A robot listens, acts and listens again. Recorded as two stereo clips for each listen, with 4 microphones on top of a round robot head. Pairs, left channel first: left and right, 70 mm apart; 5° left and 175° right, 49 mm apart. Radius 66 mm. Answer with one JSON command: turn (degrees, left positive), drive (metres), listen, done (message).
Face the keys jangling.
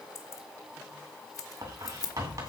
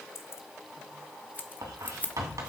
{"turn": 60}
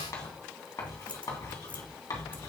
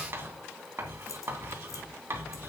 {"listen": true}
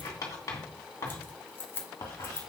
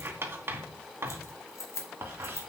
{"turn": 30}
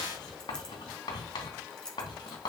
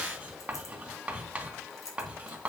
{"turn": 10}
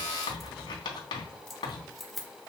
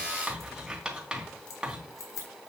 {"done": "Found it: keys jangling, straight ahead."}